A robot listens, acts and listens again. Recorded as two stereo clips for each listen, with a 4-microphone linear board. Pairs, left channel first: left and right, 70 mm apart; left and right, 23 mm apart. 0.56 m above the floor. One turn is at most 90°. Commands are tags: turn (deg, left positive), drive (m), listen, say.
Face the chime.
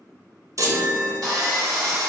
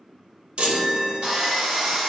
<turn deg="-50"/>
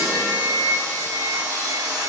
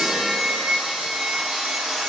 <listen/>
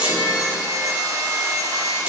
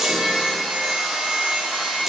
<turn deg="-20"/>
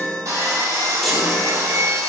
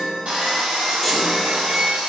<say>Found it: a chime, straight ahead, under 1 m away.</say>